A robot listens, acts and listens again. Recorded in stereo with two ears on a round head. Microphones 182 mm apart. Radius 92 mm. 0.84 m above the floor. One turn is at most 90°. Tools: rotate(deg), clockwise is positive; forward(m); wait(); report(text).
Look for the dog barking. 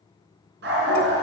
rotate(60)
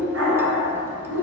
rotate(70)
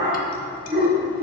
rotate(25)
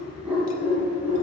rotate(10)
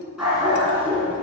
rotate(10)
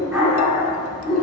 report("Facing the dog barking, 2 to 4 m away.")